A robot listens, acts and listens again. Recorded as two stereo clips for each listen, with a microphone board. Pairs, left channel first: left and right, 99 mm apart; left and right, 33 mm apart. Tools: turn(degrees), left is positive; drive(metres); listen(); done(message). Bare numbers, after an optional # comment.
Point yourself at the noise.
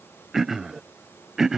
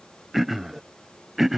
turn(-30)
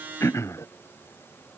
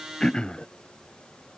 # So it is at 30° left.
turn(30)
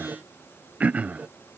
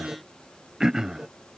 # The throat clearing is now 15° right.
turn(-15)
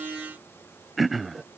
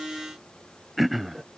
done("Found it: throat clearing, straight ahead.")